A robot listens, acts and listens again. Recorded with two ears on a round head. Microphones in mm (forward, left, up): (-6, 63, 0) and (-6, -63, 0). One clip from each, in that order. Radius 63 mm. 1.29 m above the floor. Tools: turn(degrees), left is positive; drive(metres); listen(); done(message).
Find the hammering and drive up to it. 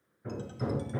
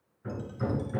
turn(degrees=-20)
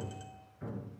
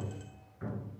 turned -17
turn(degrees=-145)
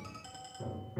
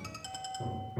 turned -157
turn(degrees=10)
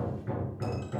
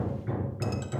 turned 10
drive(metres=1.0)
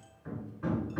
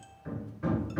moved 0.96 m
drive(metres=1.0)
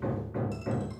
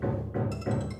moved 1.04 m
drive(metres=1.0)
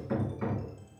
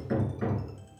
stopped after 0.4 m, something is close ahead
done("Arrived at the hammering, straight ahead.")